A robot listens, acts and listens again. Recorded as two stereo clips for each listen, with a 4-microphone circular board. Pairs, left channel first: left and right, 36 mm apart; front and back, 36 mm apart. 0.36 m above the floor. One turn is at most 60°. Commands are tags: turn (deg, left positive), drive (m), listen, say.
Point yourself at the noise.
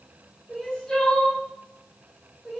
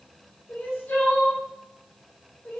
<turn deg="15"/>
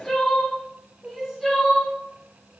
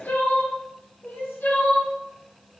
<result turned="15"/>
<say>Facing the crying, under 1 m away.</say>